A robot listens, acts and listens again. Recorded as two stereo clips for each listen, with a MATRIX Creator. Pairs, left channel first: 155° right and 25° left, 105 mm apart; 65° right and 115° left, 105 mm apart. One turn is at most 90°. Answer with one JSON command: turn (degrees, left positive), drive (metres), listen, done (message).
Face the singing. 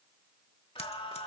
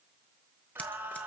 {"turn": -90}
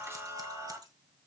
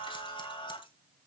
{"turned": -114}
{"turn": -35}
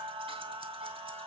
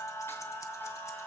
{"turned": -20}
{"done": "Found it: singing, straight ahead, 2 to 4 m away."}